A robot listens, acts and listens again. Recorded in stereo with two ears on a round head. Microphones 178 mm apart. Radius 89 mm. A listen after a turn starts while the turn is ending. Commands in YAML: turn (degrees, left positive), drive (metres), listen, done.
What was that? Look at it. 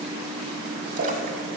turn: -40
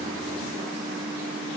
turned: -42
listen: true
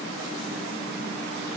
done: "I heard a splash, but can't make it out now. It was about 5° left or 100° right."